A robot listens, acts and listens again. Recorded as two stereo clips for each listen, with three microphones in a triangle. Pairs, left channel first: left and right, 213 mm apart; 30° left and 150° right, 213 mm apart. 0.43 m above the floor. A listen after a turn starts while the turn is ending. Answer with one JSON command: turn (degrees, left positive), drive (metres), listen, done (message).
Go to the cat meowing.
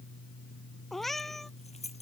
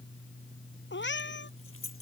{"drive": 1.0}
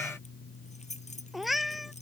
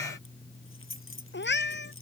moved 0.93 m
{"drive": 1.0}
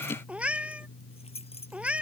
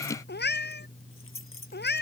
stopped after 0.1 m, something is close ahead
{"done": "Something is in my way. I am facing the cat meowing but have not reached it."}